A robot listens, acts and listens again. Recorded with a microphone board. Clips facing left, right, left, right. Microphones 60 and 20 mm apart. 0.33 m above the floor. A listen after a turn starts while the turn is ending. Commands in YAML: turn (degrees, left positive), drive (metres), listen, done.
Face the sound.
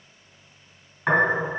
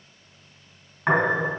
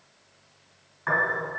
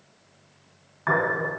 turn: -15
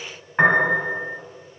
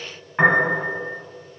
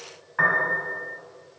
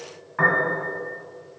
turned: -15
done: "Found it: a piano, straight ahead, 1 to 2 m away."